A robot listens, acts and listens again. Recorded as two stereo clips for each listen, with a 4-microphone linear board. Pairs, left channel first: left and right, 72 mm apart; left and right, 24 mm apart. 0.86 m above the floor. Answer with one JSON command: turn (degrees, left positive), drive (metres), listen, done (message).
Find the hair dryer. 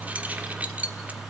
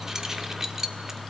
{"listen": true}
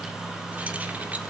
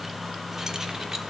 {"listen": true}
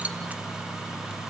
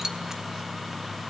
{"done": "I can't make out a hair dryer, only keys jangling."}